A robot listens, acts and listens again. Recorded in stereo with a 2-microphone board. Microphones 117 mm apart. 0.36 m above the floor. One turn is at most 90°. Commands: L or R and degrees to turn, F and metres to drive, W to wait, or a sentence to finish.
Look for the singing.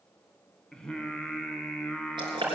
L30
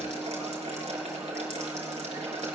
W
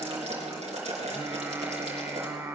R25
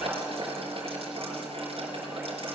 W
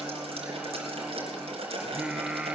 R10
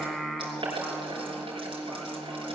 Facing the singing, 1 to 2 m away.